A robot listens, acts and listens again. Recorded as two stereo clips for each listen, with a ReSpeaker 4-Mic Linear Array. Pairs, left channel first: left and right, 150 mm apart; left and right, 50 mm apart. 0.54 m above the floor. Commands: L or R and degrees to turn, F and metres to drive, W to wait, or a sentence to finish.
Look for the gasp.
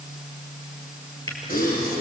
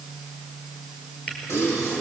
L70
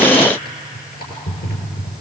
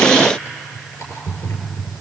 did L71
W
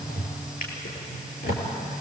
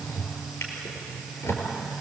I heard a gasp, but can't make it out now. It was about 5° right or 40° left.